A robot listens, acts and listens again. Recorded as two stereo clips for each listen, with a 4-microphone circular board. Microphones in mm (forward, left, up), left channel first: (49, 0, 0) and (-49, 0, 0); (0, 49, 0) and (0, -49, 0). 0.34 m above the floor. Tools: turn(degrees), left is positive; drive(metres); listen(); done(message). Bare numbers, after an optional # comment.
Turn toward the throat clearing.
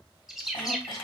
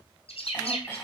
# The throat clearing: 20° left.
turn(20)
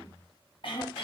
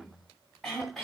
done("Facing the throat clearing.")